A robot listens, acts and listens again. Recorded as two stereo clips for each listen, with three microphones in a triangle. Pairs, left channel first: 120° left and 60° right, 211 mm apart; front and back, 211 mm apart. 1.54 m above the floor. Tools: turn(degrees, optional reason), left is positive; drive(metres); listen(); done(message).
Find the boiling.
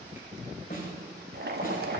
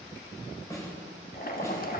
turn(degrees=-35, reason="The boiling: 35° right.")
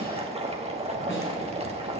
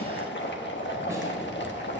done("Found it: boiling, straight ahead.")